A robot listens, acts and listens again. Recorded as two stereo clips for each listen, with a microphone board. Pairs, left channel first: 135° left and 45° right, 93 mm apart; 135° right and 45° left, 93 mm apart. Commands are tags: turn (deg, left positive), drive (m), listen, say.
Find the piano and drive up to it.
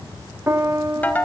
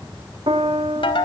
<turn deg="20"/>
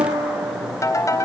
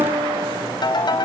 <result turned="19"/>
<drive m="1.0"/>
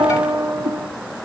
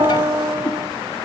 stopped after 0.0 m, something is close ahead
<say>Blocked. The piano is further on, straight ahead.</say>